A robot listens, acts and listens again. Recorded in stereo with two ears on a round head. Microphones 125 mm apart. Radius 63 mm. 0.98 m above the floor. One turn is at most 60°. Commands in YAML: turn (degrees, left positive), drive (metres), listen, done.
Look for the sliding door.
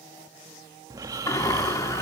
turn: 20
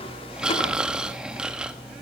listen: true
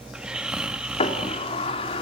turn: 60
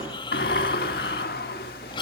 turn: 60
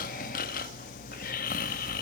turn: 35
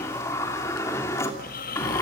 turn: 20
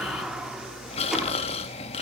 done: "Found it: a sliding door, straight ahead."